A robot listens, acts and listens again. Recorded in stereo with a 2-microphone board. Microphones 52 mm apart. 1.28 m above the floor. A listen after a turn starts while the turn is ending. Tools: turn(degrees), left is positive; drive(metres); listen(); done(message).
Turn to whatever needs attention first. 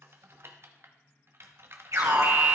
turn(degrees=-90)
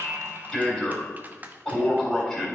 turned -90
turn(degrees=10)
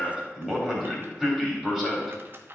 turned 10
done("Facing the alarm, 2 to 4 m away.")